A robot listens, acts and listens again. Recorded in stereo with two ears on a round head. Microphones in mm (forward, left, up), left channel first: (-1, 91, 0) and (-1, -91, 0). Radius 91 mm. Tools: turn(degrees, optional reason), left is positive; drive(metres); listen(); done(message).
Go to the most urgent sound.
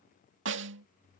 listen()
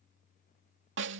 listen()
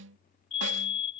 turn(degrees=30, reason="The fire alarm: about 30° left or 150° left.")
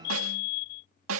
turn(degrees=115, reason="So it is at 115° left.")
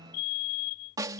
turn(degrees=50, reason="The fire alarm is now 50° left.")
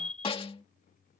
drive(metres=1.0)
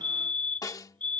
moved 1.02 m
turn(degrees=10, reason="The fire alarm is now 10° left.")
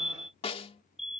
drive(metres=1.0)
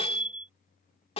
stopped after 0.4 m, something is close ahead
turn(degrees=-10, reason="The fire alarm is now 10° right.")
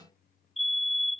done("I am next to the fire alarm.")